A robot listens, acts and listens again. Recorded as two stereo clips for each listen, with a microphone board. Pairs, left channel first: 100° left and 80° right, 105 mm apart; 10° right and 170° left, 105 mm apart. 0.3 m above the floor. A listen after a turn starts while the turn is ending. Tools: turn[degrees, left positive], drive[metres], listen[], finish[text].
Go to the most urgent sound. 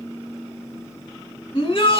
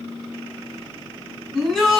Thought: The shout: 75° left.
Action: turn[75]
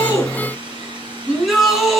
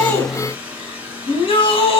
Thought: The shout is now 10° left.
Action: turn[10]
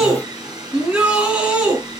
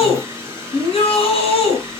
Action: drive[1.0]
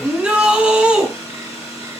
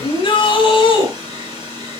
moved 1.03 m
Action: drive[1.0]
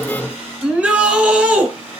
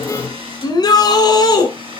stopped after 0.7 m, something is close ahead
Action: finish[I am next to the shout.]